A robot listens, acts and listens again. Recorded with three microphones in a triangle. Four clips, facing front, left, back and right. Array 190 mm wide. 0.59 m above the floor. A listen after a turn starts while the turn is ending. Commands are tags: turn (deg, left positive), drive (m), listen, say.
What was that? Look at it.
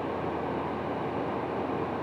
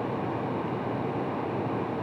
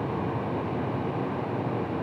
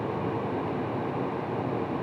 <listen/>
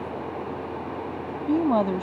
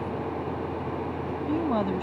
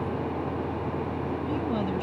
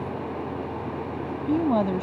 <turn deg="-30"/>
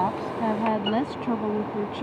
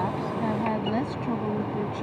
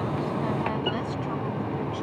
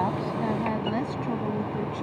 <say>Facing the woman speaking.</say>